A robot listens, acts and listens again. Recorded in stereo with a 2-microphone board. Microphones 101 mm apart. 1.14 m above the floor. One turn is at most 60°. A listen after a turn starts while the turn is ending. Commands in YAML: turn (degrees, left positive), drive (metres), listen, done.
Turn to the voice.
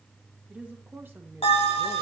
turn: -20
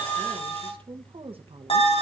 turn: -60
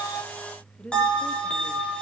turn: 10
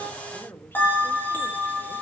turn: 20
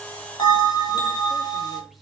listen: true
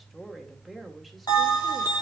done: "Facing the woman speaking."